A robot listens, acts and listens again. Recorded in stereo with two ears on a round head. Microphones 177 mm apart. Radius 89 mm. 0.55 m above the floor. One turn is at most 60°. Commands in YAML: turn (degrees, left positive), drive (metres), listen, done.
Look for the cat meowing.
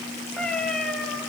turn: 30
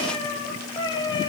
turn: 60
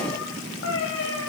turn: 60
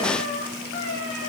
turn: 55
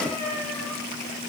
done: "Found it: a cat meowing, straight ahead."